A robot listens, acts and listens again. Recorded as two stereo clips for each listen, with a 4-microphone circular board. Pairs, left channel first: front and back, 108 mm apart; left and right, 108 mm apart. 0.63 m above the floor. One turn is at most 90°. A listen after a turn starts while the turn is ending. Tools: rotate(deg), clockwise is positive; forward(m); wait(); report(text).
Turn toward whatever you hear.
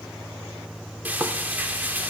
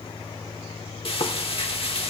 rotate(-90)
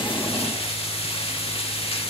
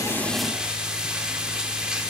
rotate(10)
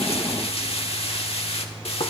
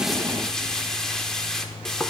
report("Found it: frying, straight ahead, 1 to 2 m away.")